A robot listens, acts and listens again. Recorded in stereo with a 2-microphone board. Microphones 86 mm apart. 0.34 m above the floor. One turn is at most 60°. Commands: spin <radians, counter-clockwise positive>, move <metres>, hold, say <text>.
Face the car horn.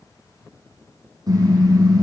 spin -0.79
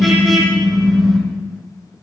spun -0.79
say Found it: a car horn, straight ahead.